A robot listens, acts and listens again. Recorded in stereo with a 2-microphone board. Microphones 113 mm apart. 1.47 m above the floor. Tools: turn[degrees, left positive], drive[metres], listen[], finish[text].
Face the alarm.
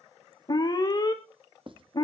Thought: The alarm: about 35° left or 145° left.
Action: turn[35]
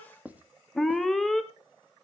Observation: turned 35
Action: finish[Facing the alarm.]